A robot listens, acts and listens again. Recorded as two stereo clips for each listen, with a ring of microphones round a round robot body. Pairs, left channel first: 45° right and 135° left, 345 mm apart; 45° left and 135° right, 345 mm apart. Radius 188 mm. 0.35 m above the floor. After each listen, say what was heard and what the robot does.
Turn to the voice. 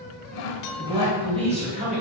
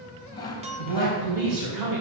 The man speaking: 160° right. Turn 160° right.
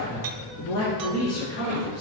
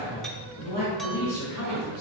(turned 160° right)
The man speaking is now 10° left. Turn 10° left.
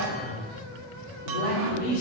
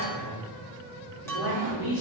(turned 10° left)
Found it: a man speaking, straight ahead.